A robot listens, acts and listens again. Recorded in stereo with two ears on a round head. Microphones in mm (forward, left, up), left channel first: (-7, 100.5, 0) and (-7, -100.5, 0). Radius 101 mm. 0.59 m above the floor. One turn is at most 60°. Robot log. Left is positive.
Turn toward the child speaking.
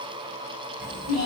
note: The child speaking: about 35° right or 145° right.
cmd yaw -35
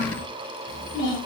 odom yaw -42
note: So it is at 20° left.
cmd yaw +20
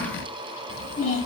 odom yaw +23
note: The child speaking is now 20° left.
cmd yaw +20
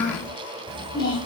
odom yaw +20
note: The child speaking is now 20° left.
cmd yaw +20
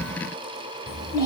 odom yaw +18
note: The child speaking is now 20° left.
cmd yaw +20
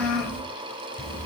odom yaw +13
note: The child speaking is now 10° left.
cmd yaw +10
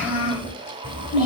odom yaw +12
end: Found it: a child speaking, straight ahead.